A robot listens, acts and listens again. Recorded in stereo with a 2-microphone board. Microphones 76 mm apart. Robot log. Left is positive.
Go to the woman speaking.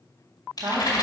note: The woman speaking: about 60° right or 120° right.
cmd yaw -60
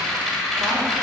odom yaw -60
cmd idle
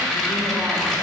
cmd idle
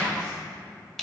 end: I heard a woman speaking, but can't make it out now. It was about straight ahead or 60° right. I did not reach it.